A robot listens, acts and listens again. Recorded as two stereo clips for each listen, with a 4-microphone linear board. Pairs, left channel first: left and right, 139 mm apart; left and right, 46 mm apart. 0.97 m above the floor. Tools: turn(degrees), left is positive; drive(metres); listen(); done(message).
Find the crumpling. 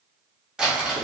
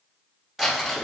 turn(degrees=-30)
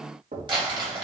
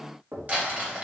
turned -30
turn(degrees=-145)
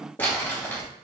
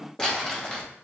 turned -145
turn(degrees=15)
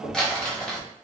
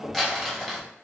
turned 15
done("Facing the crumpling, 1 to 2 m away.")